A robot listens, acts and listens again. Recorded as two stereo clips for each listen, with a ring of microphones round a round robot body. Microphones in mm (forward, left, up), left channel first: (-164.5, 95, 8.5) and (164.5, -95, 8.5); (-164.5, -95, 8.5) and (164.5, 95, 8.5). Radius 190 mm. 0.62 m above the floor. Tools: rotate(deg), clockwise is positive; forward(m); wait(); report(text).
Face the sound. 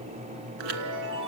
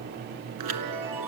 rotate(10)
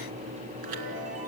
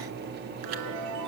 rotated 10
report("Found it: a chime, straight ahead.")